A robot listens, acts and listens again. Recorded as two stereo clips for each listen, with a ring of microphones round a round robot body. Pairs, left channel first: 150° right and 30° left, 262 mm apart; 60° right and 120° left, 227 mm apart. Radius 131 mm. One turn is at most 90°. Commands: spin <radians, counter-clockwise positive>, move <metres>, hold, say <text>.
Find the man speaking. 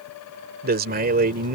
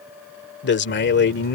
spin -0.44
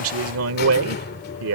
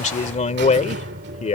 say Facing the man speaking.